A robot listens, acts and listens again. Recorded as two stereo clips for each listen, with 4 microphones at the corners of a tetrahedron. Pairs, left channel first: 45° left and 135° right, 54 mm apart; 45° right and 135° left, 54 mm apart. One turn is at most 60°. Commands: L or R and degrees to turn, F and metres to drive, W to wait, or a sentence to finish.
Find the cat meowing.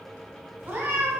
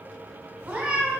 R60
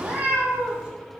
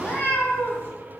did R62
R60
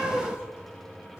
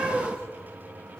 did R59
L20
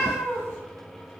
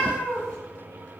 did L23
L15
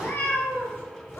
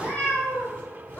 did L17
L10
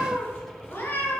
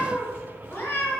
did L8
Found it: a cat meowing, straight ahead, 2 to 4 m away.